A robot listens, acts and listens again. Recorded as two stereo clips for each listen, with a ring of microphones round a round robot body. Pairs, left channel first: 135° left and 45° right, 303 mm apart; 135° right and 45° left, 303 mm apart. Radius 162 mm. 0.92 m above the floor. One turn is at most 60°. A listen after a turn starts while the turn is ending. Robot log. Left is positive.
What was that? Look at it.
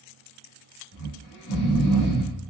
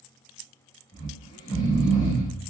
note: The snoring: 150° left.
cmd yaw +60
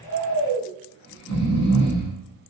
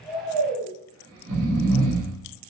note: The snoring is now 90° left.
cmd yaw +60
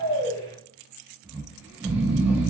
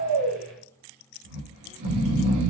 note: The snoring is now 40° left.
cmd yaw +40
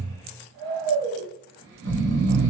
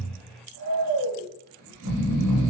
note: The snoring is now 10° left.
cmd yaw +10
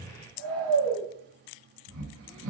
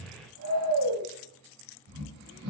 end: Facing the snoring, under 1 m away.